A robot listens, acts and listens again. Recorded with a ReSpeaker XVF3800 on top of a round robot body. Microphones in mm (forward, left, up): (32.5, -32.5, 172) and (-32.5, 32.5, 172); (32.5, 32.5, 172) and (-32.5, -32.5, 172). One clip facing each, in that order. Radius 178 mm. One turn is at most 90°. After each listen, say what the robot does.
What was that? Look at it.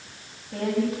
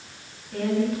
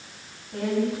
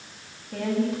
Turn 90° right.
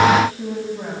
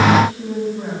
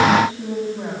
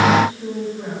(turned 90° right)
Turn 10° right.
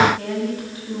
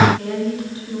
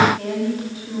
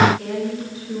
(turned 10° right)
Found it: a woman speaking, straight ahead.